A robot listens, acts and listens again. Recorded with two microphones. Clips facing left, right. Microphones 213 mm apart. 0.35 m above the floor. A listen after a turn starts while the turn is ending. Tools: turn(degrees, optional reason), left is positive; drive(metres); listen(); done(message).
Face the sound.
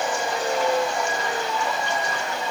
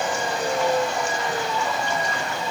listen()
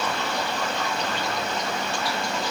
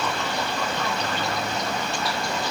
listen()
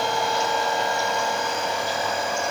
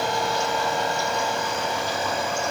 done("I can't make out anything to turn to.")